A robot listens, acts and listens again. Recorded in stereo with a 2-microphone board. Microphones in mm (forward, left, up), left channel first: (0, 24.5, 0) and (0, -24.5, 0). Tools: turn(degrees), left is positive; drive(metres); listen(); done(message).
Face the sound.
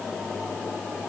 listen()
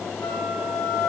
turn(degrees=65)
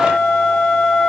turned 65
turn(degrees=10)
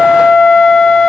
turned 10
done("Found it: a flute, straight ahead, 2 to 4 m away.")